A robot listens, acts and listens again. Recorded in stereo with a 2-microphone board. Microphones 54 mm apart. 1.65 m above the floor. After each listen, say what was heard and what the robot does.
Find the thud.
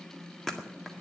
Turn 30° left.
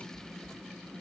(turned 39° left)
Keep listening.
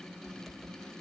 I heard a thud, but can't make it out now. It was about 30° right or 130° left.